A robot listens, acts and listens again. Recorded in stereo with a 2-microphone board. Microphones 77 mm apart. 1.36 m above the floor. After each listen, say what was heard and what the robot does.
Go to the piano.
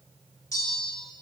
Keep listening.
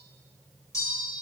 Keep listening.
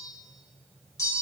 I can't make out a piano to turn to.